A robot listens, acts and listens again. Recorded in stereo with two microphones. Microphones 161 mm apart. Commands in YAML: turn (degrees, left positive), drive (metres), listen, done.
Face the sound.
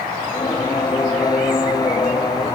turn: 25
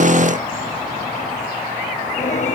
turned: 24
turn: 130
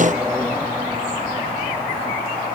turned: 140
turn: -10
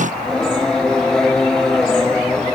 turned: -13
done: "Found it: singing, straight ahead."